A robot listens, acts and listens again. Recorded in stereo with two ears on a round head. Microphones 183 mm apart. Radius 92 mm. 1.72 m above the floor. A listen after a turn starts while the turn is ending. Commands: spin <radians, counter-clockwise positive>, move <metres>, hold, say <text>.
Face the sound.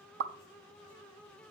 spin -1.05
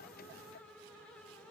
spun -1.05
hold
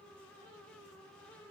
say I heard a pop, but can't make it out now. It was about straight ahead or 60° right.